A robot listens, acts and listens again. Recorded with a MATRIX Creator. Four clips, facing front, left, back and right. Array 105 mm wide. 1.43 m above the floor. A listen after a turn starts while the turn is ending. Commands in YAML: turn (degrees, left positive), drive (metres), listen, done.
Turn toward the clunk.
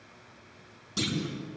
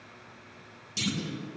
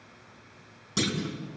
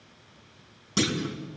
turn: -110
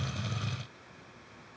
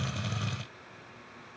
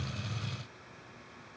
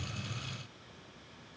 done: "I heard a clunk from this way, but can't make it out now."